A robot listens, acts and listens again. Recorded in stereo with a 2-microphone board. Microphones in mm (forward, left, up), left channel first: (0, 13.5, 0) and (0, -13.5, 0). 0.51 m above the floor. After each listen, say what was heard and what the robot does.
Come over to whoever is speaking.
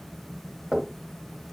Keep listening.
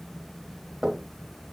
Keep listening.
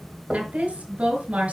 The woman speaking: about 65° right or 115° right. Turn 65° right.
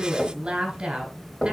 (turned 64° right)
So it is at 40° right. Turn 40° right.
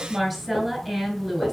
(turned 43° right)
Drive 1.0 m forward.
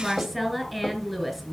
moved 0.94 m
Drive 1.0 m forward.
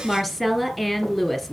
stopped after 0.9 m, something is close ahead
The woman speaking is now 15° left. Turn 15° left.
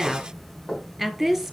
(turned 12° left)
I am next to the woman speaking.